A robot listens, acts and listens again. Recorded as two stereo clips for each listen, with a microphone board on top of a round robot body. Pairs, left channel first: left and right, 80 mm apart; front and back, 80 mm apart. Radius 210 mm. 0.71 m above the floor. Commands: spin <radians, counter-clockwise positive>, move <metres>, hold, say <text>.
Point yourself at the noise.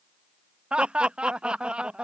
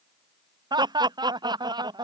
spin -2.97
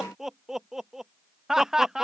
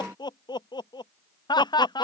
say Facing the laughter.